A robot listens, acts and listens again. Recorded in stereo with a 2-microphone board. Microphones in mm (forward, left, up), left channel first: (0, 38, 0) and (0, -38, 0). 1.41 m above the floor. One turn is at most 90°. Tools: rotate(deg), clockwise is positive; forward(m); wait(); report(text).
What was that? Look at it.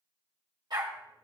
rotate(65)
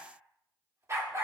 rotate(40)
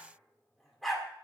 report("Found it: a dog barking, straight ahead, 1 to 2 m away.")